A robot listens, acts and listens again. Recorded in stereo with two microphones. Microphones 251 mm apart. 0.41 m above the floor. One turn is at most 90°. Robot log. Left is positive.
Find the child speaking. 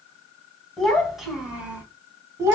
cmd yaw -30
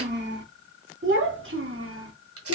note: So it is at 125° right.
cmd yaw -90
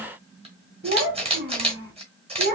note: The child speaking is now 40° right.
cmd yaw -40
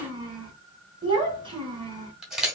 note: The child speaking is now 20° right.
cmd yaw -20
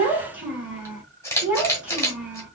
end: Facing the child speaking, 2 to 4 m away.